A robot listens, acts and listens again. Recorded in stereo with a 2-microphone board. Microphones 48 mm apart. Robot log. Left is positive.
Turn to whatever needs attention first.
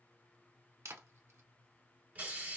cmd idle
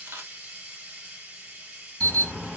note: The alarm: about 20° left or 160° left.
cmd yaw +20
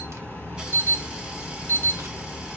note: So it is at 135° left.
cmd yaw +135
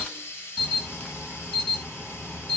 note: The alarm is now 20° left.
cmd yaw +20
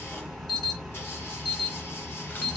end: Found it: an alarm, straight ahead.